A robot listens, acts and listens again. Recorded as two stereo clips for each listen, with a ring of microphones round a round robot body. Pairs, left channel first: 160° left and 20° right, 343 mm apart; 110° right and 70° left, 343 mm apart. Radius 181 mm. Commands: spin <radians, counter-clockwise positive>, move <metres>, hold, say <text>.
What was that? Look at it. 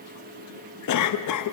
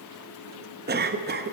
spin 2.18
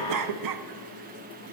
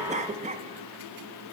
say Found it: a cough, straight ahead, under 1 m away.